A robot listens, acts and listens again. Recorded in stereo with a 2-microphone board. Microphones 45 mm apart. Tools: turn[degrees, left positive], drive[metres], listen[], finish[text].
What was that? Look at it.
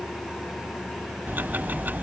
Thought: The ticking: about 45° right or 135° right.
Action: turn[-45]
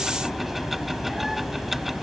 Action: finish[Found it: ticking, straight ahead.]